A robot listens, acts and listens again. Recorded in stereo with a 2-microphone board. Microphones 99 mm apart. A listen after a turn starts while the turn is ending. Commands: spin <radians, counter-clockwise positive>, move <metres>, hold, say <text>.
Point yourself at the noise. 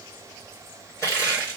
spin 0.52
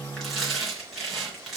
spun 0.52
say Found it: crushing, straight ahead.